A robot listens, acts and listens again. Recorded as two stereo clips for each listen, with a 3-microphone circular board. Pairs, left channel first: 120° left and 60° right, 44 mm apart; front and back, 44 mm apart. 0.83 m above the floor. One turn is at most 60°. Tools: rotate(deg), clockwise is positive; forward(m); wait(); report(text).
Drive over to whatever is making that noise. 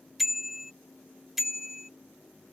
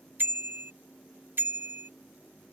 rotate(60)
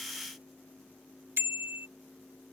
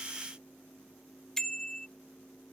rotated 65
rotate(60)
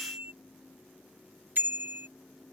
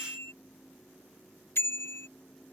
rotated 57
rotate(20)
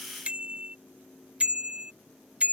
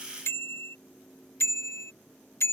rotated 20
forward(1.0)
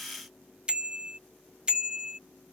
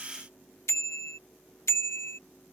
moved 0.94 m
forward(1.0)
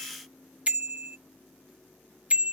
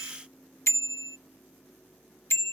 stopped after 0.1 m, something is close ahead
report("Arrived at the bicycle bell, straight ahead.")